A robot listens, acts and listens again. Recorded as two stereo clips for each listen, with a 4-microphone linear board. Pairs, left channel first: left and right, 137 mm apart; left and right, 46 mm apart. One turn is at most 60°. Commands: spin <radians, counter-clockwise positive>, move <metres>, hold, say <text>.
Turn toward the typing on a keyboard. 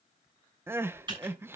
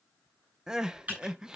spin -0.61
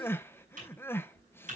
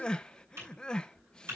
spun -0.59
spin -1.05
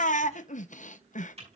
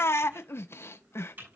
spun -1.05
spin -0.87
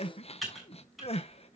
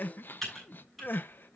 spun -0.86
say Facing the typing on a keyboard, over 4 m away.